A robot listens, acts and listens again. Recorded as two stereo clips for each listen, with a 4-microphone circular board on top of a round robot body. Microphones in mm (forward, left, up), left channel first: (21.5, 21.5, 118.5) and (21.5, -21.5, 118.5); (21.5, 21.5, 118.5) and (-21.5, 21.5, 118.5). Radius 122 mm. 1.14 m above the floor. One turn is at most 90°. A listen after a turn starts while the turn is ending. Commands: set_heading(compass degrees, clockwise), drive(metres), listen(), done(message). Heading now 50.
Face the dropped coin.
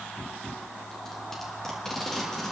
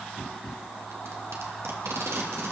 listen()
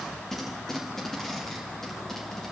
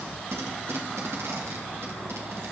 listen()
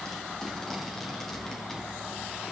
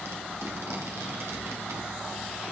done("I can't make out a dropped coin, only tape being pulled.")